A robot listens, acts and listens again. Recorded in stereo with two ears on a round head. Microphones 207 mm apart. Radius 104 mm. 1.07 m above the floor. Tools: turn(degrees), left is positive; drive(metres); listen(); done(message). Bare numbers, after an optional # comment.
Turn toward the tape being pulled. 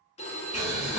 listen()
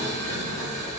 listen()
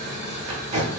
# The tape being pulled: about 25° right or 155° right.
turn(-25)
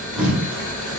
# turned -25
done("Found it: tape being pulled, straight ahead, 1 to 2 m away.")